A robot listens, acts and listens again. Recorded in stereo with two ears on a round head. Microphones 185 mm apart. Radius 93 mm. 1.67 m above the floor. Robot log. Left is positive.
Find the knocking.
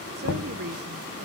note: The knocking: about 65° left or 115° left.
cmd yaw +65
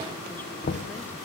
note: So it is at 45° left.
cmd yaw +45
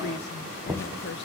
end: Found it: knocking, straight ahead.